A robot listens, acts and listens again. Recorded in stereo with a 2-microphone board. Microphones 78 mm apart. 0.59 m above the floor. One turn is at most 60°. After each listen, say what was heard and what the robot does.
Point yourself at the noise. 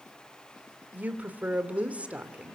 Turn 30° right.
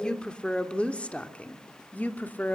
So it is at 25° left. Turn 25° left.
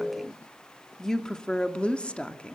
The woman speaking is now 15° left. Turn 15° left.
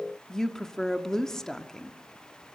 Facing the woman speaking, 1 to 2 m away.